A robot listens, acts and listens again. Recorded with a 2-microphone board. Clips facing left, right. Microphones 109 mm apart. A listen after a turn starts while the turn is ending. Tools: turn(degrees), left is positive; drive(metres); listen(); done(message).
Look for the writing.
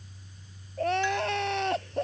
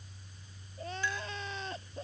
listen()
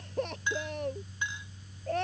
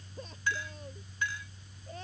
listen()
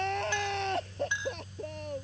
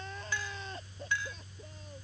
done("I can't make out writing, only crying and a clink.")